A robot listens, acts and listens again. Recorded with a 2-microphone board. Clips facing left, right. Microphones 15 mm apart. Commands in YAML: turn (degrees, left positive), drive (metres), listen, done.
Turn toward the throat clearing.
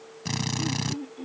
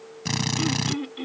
turn: -75
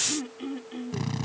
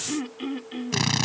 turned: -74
turn: -25
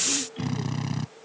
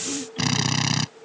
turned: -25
listen: true
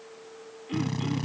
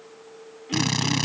listen: true
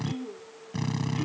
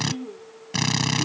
done: "Found it: throat clearing, straight ahead."